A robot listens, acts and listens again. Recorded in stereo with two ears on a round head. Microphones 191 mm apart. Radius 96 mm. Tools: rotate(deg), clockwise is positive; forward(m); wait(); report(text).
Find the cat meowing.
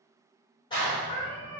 rotate(-90)
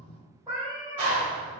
rotate(15)
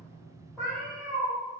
report("Found it: a cat meowing, straight ahead, 1 to 2 m away.")